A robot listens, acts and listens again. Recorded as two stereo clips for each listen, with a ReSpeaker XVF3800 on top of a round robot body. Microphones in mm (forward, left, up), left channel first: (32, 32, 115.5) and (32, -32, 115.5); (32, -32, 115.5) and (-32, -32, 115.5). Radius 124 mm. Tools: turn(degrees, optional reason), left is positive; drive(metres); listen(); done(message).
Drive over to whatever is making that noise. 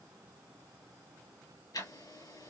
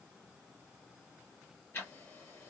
turn(degrees=65, reason="The ticking: 65° left.")
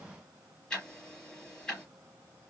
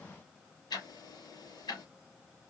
turn(degrees=15, reason="The ticking is now 15° left.")
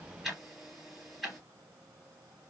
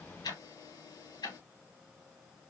drive(metres=1.0)
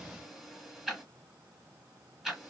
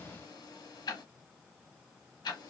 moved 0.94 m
drive(metres=1.0)
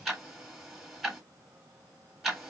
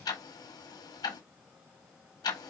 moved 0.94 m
drive(metres=1.0)
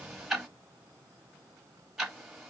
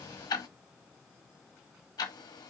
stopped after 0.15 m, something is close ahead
done("I am next to the ticking.")